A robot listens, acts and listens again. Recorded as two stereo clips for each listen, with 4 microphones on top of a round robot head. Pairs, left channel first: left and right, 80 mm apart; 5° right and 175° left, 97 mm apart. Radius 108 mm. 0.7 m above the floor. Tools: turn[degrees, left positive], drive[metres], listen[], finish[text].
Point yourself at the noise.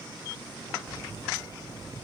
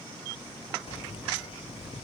Thought: The keys jangling: 35° right.
Action: turn[-35]
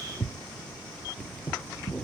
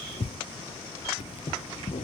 Action: finish[Found it: keys jangling, straight ahead.]